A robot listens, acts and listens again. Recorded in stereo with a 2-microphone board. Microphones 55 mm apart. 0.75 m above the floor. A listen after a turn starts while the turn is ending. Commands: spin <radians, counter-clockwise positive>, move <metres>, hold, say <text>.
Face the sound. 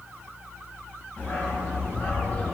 spin 0.61
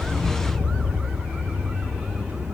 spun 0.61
say Found it: a dog barking, straight ahead, over 4 m away.